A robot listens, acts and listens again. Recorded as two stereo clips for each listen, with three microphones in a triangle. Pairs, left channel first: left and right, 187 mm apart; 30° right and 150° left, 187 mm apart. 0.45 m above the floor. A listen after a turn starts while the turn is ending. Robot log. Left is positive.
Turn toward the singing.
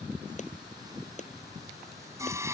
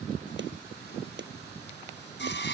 note: The singing: 15° right.
cmd yaw -15
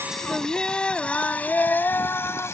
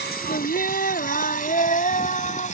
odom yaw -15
note: The singing is now 15° left.
cmd yaw +15
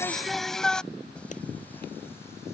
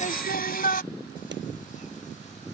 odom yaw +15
end: Found it: singing, straight ahead.